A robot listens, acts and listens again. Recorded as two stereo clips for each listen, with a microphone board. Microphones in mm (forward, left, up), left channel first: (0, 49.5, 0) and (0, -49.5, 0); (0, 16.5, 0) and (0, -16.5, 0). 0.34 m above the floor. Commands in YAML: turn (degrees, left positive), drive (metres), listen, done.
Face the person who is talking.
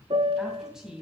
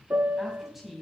turn: -30
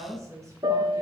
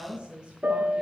turn: -145
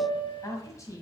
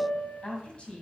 turn: 35
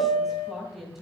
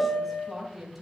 done: "Found it: a woman speaking, straight ahead, 2 to 4 m away."